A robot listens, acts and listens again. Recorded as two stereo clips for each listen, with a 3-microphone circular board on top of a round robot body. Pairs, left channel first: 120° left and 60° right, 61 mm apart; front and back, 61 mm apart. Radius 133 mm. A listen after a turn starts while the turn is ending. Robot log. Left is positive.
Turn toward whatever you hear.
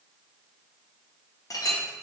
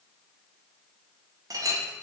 note: The clink: 150° left.
cmd yaw +150
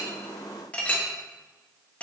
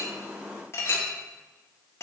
note: The clink is now 50° left.
cmd yaw +50
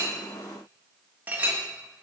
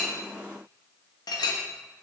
end: Facing the clink.